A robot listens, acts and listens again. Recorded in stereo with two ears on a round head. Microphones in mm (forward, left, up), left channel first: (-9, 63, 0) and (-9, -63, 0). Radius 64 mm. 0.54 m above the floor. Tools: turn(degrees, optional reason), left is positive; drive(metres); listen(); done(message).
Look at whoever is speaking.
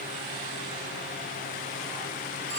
listen()
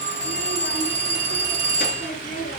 turn(degrees=60, reason="The child speaking: about 60° left or 120° left.")
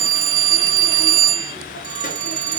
listen()
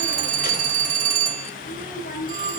turn(degrees=60, reason="So it is at 60° left.")
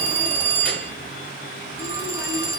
listen()
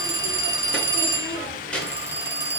turn(degrees=10, reason="The child speaking is now 10° left.")
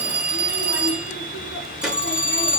done("Facing the child speaking, over 4 m away.")